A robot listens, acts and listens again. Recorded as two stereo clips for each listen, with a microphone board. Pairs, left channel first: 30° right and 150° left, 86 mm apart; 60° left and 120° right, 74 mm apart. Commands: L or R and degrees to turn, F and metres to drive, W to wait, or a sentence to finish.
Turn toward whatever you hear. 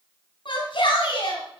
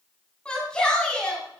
R15
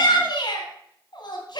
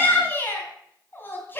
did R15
Facing the shout, 2 to 4 m away.